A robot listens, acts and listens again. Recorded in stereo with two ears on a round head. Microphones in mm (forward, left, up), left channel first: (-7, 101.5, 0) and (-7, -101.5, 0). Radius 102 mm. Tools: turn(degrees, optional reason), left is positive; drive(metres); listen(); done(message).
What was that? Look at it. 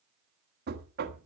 turn(degrees=-45, reason="The knocking: about 45° right or 135° right.")
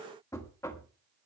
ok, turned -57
turn(degrees=15, reason="So it is at 15° left.")
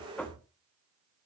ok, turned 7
done("Facing the knocking.")